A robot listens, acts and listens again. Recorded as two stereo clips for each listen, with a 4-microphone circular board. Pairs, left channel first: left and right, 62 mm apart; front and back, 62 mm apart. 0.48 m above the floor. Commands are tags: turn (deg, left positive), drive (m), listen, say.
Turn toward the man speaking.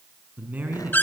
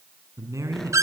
<turn deg="-150"/>
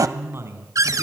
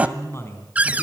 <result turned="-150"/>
<turn deg="-45"/>
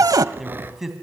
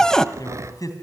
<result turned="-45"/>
<say>Facing the man speaking, 2 to 4 m away.</say>